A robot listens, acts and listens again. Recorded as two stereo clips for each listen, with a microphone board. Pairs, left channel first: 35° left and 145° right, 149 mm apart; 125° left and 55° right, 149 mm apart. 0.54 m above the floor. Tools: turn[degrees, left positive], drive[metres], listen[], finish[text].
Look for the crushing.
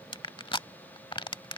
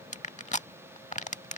Thought: The crushing: 90° left.
Action: turn[90]
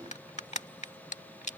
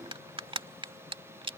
Action: finish[Found it: crushing, straight ahead.]